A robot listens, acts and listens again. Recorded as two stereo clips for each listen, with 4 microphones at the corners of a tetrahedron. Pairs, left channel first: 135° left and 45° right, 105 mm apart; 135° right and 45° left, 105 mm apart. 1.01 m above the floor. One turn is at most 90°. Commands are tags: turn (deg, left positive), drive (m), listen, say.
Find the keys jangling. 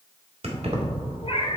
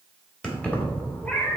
<turn deg="-65"/>
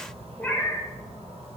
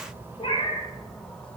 <listen/>
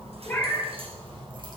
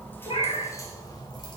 <turn deg="-85"/>
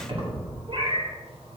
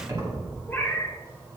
<turn deg="-15"/>
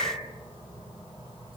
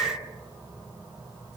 <listen/>
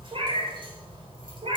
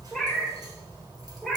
<listen/>
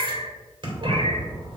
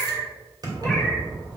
<say>Facing the keys jangling, 2 to 4 m away.</say>